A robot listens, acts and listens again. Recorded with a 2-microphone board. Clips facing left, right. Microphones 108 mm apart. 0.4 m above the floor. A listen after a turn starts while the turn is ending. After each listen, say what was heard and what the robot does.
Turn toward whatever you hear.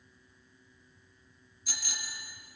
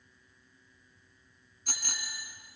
The bicycle bell: about 50° right or 130° right. Turn 50° right.
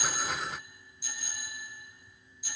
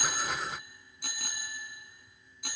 So it is at 75° right. Turn 75° right.
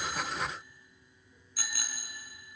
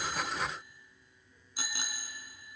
The bicycle bell is now 25° right. Turn 25° right.
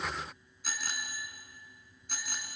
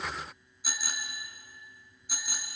Found it: a bicycle bell, straight ahead.